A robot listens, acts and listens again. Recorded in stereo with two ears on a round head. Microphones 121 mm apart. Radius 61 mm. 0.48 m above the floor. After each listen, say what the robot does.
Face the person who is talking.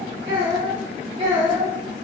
Turn 40° right.
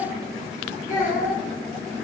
Turn 10° right.
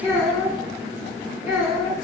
Found it: a child speaking, straight ahead.